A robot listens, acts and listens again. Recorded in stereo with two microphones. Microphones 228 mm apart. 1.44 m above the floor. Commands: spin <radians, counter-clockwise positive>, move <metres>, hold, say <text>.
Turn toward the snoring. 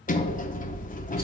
hold
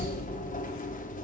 hold
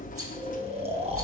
spin -0.44
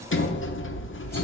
hold
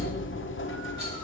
hold
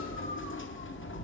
say I heard snoring, but can't make it out now. It was about straight ahead or 130° right.